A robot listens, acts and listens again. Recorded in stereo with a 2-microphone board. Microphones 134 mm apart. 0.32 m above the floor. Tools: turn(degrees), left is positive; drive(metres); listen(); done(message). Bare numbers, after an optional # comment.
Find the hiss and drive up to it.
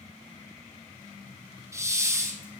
# The hiss: about 20° right or 160° right.
turn(-20)
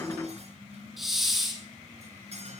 drive(1.0)
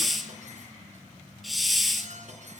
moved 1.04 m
drive(1.0)
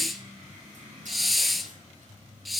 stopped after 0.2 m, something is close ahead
done("Arrived at the hiss, straight ahead.")